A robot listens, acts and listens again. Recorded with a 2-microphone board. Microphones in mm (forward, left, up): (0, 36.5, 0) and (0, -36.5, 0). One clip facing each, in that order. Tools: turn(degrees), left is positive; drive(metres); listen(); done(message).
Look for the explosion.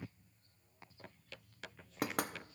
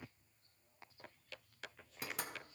listen()
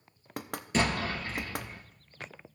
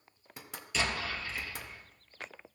turn(degrees=40)
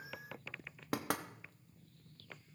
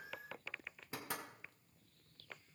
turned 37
listen()
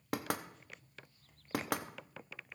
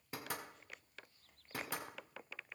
done("I heard an explosion, but can't make it out now. It was about 5° left or 100° left.")